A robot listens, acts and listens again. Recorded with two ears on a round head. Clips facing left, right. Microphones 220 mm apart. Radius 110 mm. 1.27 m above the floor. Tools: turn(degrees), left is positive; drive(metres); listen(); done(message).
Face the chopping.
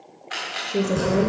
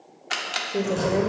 turn(degrees=30)
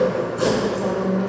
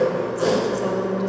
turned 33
turn(degrees=135)
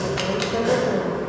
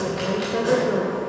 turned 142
done("Found it: chopping, straight ahead, 2 to 4 m away.")